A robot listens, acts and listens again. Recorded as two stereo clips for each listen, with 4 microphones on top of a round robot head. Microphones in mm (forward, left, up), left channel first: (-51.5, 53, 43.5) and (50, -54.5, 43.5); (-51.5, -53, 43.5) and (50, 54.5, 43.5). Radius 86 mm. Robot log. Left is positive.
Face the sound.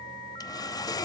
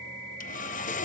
note: The sawing: 165° right.
cmd yaw -165
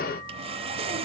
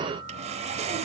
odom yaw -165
end: Facing the sawing, 1 to 2 m away.